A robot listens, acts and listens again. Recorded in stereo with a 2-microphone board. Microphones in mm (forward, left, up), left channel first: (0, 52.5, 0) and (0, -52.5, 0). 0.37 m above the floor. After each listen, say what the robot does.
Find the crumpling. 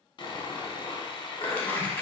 Turn 30° left.
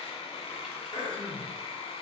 Keep listening.
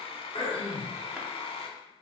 Keep listening.
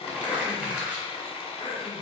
Turn 15° right.
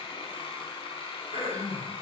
Keep listening.
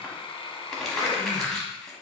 Facing the crumpling.